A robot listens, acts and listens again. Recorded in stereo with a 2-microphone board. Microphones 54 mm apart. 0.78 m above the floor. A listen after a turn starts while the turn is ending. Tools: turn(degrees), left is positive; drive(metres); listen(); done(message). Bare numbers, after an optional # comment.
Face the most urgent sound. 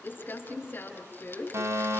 # The fire alarm: about 55° right or 125° right.
turn(-55)
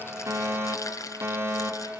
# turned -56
# So it is at 55° right.
turn(-55)
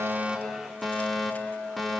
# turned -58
done("Found it: a fire alarm, straight ahead.")